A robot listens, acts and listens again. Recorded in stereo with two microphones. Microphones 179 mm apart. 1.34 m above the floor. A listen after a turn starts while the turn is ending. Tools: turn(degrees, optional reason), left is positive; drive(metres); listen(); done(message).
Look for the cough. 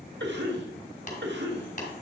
turn(degrees=-90)
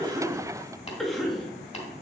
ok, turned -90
done("Found it: a cough, straight ahead.")